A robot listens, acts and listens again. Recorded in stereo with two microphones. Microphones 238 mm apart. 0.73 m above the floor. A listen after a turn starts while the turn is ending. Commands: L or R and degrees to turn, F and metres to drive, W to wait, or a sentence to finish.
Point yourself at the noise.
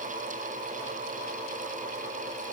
W
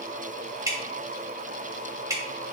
R30
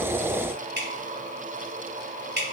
R135
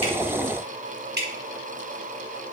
R45
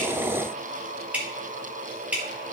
Facing the dripping, 1 to 2 m away.